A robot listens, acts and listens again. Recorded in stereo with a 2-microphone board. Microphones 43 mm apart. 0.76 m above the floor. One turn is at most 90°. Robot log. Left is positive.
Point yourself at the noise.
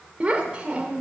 note: The child speaking: about 25° right or 155° right.
cmd yaw -25
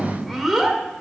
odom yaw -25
end: Found it: a child speaking, straight ahead.